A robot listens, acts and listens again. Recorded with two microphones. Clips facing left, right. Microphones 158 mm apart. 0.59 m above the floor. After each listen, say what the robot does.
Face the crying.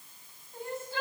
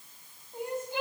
Turn 15° right.
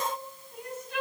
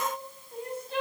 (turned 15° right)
Turn 150° right.
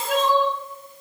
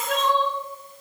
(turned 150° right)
Facing the crying.